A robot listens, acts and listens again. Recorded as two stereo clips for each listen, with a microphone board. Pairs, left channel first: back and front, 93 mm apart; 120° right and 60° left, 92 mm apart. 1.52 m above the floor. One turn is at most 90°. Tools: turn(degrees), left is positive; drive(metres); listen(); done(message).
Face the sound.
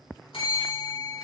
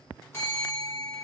turn(degrees=90)
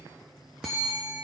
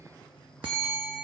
turn(degrees=80)
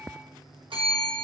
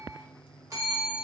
done("Found it: a bell, straight ahead, 1 to 2 m away.")